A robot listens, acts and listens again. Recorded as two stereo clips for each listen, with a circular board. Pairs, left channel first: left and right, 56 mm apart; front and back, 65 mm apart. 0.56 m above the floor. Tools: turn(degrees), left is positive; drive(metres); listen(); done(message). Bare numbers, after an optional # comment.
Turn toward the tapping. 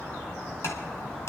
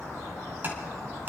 # The tapping: 120° left.
turn(120)
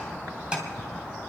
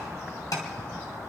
# The tapping is now 20° right.
turn(-20)
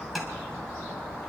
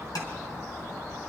done("Found it: tapping, straight ahead.")